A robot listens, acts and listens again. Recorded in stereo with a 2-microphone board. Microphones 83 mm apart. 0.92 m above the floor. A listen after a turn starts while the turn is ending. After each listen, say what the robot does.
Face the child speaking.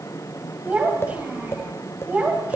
Turn 15° right.
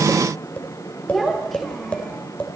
Turn 30° left.
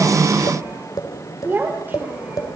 Turn 20° right.
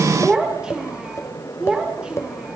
Turn 10° right.
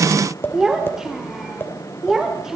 Found it: a child speaking, straight ahead, 2 to 4 m away.